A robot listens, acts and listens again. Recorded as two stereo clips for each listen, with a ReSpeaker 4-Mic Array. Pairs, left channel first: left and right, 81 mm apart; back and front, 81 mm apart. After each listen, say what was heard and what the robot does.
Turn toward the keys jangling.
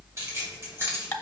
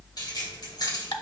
The keys jangling: 150° right. Turn 150° right.
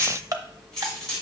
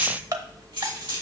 The keys jangling is now 10° left. Turn 10° left.
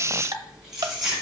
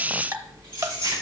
Found it: keys jangling, straight ahead, over 4 m away.